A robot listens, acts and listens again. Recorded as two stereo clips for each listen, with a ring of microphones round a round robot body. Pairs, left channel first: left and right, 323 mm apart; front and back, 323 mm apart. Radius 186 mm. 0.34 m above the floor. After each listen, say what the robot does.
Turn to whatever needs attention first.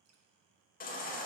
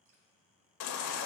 Turn 30° left.
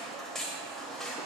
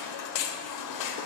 Facing the baby crying, under 1 m away.